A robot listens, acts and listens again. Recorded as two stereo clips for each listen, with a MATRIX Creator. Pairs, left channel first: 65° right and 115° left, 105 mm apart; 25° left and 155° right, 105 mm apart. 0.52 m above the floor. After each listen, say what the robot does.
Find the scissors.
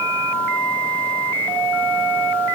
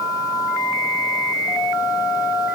Keep listening.
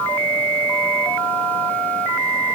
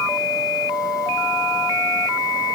Keep listening.
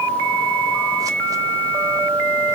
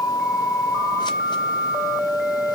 I can't make out scissors.